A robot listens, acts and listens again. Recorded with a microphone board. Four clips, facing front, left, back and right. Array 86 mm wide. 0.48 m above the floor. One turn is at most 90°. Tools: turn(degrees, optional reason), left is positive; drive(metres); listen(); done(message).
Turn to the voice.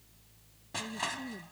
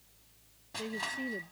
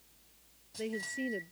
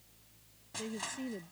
turn(degrees=90, reason="The woman speaking: 165° left.")
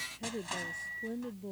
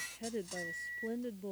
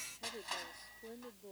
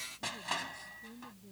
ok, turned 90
turn(degrees=75, reason="The woman speaking is now 75° left.")
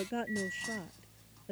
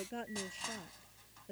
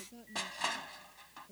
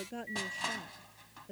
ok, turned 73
done("Found it: a woman speaking, straight ahead.")